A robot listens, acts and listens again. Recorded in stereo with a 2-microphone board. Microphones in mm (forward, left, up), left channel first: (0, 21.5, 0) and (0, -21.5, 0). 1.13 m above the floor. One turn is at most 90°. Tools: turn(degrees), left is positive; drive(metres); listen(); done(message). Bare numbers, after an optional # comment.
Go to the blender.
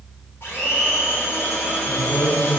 # The blender: about 70° left or 110° left.
turn(70)
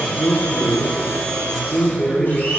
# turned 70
# So it is at 45° left.
turn(45)
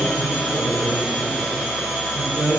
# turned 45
drive(1.0)
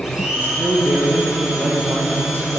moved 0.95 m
# The blender is now 10° right.
turn(-10)
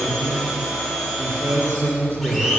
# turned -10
drive(1.0)
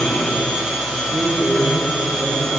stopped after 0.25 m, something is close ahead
done("I am next to the blender.")